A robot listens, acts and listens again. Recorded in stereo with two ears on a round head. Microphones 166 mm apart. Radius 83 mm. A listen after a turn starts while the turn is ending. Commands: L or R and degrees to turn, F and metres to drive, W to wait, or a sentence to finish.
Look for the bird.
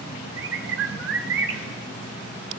R65
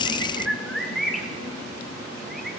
Found it: a bird, straight ahead.